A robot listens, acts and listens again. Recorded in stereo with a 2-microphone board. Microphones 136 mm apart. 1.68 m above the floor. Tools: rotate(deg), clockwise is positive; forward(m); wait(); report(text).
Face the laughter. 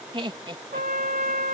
rotate(35)
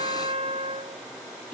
wait()
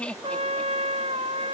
rotate(-10)
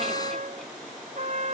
wait()
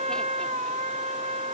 wait()
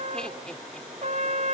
report("I heard laughter from this way, but can't make it out now.")